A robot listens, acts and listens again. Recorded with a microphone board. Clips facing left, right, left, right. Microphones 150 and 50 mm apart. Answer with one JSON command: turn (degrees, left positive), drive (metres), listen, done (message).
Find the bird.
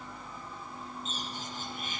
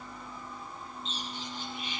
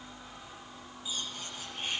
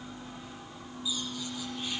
{"turn": 50}
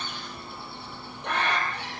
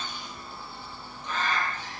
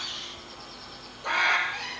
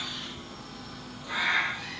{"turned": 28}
{"turn": 100}
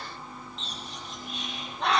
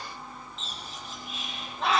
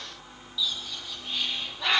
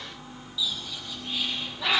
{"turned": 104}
{"done": "Facing the bird."}